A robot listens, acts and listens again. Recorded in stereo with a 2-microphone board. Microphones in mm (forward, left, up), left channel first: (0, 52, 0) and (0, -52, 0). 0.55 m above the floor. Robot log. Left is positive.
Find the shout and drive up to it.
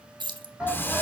cmd yaw -30
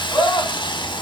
note: So it is at 25° left.
cmd yaw +25
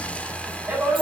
note: The shout is now 20° right.
cmd yaw -20
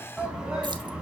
cmd fwd 1.0
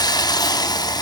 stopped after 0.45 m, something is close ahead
cmd idle
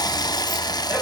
cmd idle
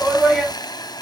end: Blocked. The shout is further on, straight ahead.